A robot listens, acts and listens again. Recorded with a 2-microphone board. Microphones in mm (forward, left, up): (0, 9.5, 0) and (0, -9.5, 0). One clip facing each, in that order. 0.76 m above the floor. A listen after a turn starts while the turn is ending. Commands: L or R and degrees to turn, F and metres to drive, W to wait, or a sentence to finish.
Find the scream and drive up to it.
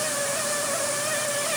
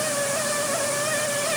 W
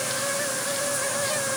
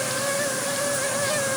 W
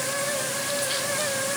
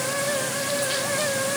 I can't make out a scream to turn to.